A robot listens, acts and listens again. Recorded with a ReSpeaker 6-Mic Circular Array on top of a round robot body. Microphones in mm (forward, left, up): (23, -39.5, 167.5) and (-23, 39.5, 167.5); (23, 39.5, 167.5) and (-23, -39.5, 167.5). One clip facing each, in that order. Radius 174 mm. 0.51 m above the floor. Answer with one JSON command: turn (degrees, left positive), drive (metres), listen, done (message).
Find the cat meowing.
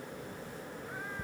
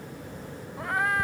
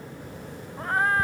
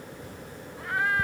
{"turn": 115}
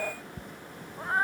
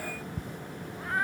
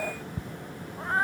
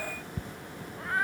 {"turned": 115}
{"done": "Found it: a cat meowing, straight ahead."}